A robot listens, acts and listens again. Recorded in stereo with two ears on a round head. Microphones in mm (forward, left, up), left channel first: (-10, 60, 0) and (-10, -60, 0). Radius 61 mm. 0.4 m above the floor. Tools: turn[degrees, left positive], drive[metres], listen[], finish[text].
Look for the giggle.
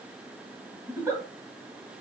Thought: The giggle: about 20° right or 160° right.
Action: turn[-20]
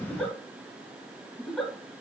Action: finish[Found it: a giggle, straight ahead, 2 to 4 m away.]